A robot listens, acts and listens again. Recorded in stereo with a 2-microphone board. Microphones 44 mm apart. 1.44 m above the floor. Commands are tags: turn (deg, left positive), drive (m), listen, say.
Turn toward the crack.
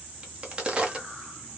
<turn deg="-20"/>
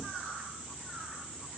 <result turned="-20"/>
<listen/>
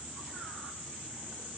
<say>I heard a crack, but can't make it out now. It was about straight ahead or 140° right.</say>